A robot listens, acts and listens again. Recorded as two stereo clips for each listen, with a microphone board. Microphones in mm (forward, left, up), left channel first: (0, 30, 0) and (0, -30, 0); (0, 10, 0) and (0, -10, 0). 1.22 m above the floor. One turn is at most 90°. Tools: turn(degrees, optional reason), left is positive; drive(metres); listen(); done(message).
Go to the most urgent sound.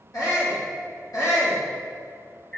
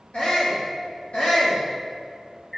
turn(degrees=75, reason="The shout: about 75° left or 105° left.")
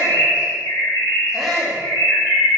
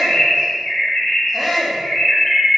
drive(metres=1.0)
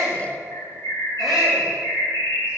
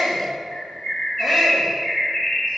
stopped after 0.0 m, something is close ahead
done("Something is in my way. I am facing the shout but have not reached it.")